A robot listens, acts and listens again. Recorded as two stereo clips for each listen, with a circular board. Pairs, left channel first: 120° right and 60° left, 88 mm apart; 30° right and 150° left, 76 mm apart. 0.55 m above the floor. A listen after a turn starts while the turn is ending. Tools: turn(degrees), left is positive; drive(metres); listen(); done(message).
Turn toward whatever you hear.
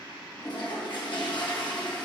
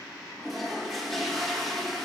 turn(degrees=-120)
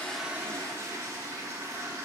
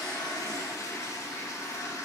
turn(degrees=10)
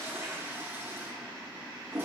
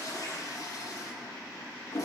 done("Found it: a toilet flushing, straight ahead, under 1 m away.")